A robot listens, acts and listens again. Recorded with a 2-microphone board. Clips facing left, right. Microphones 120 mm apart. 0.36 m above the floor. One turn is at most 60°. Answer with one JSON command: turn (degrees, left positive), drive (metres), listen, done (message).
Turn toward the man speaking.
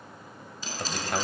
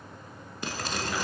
{"turn": 50}
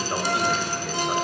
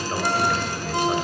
{"done": "Facing the man speaking."}